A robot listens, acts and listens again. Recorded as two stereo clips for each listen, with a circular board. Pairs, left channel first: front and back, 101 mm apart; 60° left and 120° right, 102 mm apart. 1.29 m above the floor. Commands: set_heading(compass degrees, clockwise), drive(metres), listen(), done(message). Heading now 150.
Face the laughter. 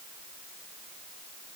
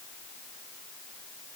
listen()
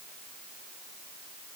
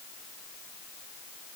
listen()
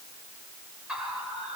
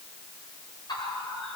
set_heading(50)
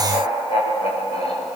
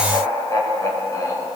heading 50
done("Facing the laughter.")